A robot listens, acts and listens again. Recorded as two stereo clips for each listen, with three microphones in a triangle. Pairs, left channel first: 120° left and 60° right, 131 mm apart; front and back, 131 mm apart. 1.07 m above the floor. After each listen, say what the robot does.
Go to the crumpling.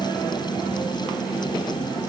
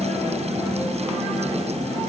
Keep listening.
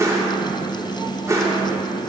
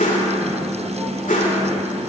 Keep listening.
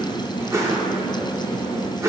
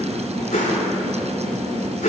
I can't make out crumpling, only a whoosh.